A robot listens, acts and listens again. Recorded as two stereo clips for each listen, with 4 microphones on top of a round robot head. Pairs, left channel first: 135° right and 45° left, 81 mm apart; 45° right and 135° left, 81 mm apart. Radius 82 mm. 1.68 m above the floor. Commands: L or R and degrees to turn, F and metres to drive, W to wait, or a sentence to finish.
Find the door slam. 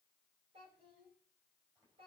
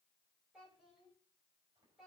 W
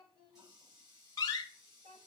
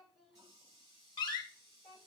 R85
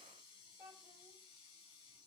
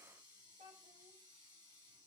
Facing where the door slam came from. I can't hear it now.